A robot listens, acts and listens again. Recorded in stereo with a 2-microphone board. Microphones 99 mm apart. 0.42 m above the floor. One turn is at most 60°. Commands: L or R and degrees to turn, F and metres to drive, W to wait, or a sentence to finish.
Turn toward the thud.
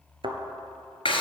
R60
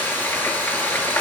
W
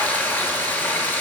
I heard a thud, but can't make it out now. It was about 10° right or 50° right.